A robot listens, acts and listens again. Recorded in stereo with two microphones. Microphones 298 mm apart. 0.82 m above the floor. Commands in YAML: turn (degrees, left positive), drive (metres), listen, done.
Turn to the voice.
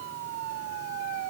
listen: true
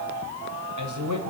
turn: -75
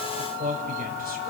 turn: -30
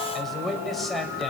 done: "Facing the man speaking, 2 to 4 m away."